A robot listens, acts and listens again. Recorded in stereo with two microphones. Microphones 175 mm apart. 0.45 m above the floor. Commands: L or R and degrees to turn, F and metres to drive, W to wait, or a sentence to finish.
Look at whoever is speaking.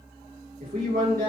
R55
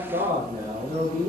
R60
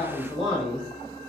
Found it: a man speaking, straight ahead.